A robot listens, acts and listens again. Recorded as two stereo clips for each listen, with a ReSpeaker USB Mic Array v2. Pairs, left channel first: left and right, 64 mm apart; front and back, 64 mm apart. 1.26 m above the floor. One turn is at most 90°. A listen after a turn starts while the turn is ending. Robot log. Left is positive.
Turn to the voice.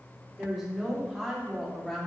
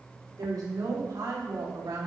note: The woman speaking: 175° left.
cmd yaw +90
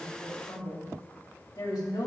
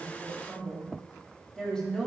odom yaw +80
note: The woman speaking is now 75° left.
cmd yaw +75
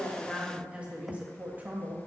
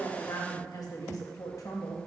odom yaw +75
note: The woman speaking is now 30° right.
cmd yaw -30
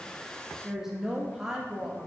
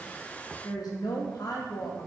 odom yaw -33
end: Facing the woman speaking.